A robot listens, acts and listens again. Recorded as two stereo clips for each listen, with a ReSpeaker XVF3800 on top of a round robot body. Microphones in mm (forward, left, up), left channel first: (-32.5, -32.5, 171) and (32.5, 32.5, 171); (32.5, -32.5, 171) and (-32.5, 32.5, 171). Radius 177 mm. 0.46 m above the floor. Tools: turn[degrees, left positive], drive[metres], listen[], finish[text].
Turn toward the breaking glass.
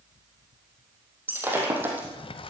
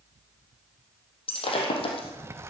Thought: The breaking glass: 25° right.
Action: turn[-25]
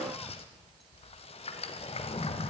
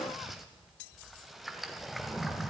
Action: finish[Facing where the breaking glass came from. I can't hear it now.]